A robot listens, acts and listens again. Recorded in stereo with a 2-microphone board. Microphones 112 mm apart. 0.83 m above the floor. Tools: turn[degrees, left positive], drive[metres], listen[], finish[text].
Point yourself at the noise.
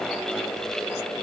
Action: listen[]
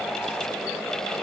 Action: listen[]
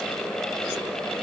Action: finish[I can't make out anything.]